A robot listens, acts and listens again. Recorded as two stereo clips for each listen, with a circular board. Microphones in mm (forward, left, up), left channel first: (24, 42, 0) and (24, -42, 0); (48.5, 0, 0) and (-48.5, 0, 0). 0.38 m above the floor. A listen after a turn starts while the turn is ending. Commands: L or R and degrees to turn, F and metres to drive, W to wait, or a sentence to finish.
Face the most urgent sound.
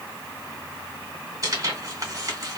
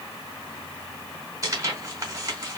W
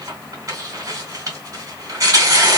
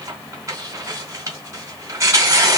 W
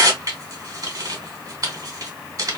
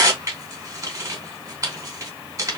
I can't make out anything urgent to turn to.